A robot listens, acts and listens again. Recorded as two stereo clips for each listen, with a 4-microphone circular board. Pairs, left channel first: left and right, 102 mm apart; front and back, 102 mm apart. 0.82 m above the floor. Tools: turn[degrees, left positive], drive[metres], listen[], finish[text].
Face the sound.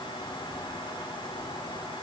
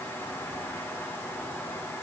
Action: listen[]
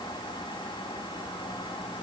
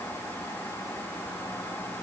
Action: listen[]
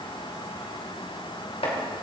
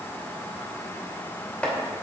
Thought: The chopping: 80° left.
Action: turn[80]
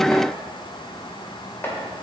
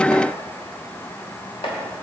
Thought: The chopping is now 20° left.
Action: turn[20]
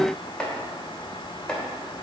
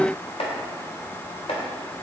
Thought: The chopping is now 10° left.
Action: turn[10]
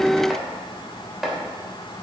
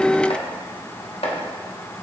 Action: finish[Found it: chopping, straight ahead.]